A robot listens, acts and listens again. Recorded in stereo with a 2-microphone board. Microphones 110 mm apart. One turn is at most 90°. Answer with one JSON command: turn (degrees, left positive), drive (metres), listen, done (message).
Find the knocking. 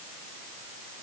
{"listen": true}
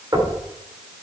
{"turn": -35}
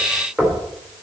{"done": "Facing the knocking, 2 to 4 m away."}